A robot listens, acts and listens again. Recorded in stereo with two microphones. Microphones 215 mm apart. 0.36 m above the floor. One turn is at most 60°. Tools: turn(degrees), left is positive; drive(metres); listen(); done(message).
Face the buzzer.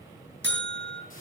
turn(degrees=-60)
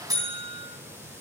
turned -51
turn(degrees=-20)
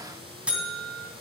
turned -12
done("Facing the buzzer, 2 to 4 m away.")